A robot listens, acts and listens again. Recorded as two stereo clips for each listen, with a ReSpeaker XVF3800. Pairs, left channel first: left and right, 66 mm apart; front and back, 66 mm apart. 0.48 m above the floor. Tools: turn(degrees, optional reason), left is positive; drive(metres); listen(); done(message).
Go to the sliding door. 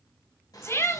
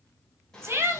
turn(degrees=80, reason="The sliding door: 80° left.")
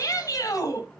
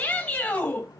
turn(degrees=15, reason="The sliding door is now 15° left.")
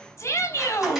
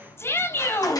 listen()
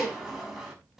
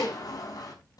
drive(metres=1.0)
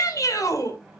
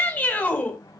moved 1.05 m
drive(metres=1.0)
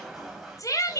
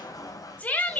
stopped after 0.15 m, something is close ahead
done("Something is in my way. I am facing the sliding door but have not reached it.")